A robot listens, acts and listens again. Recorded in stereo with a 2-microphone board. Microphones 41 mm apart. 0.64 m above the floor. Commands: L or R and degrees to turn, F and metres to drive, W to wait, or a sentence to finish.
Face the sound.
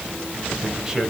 R30
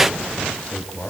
L30
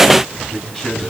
L10
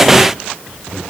Facing the man speaking.